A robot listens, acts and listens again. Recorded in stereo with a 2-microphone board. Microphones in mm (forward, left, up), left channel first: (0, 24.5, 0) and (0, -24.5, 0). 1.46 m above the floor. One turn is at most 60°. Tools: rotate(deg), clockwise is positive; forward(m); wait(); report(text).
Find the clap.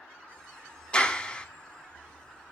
rotate(-20)
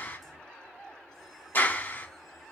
rotate(-60)
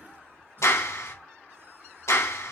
rotate(-60)
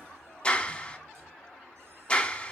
rotate(-25)
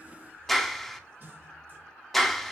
report("Facing the clap, 1 to 2 m away.")